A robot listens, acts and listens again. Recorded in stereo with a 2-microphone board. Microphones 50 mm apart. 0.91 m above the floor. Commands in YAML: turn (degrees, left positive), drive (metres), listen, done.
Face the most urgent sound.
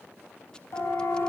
turn: 55
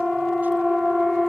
done: "Found it: a siren, straight ahead, over 4 m away."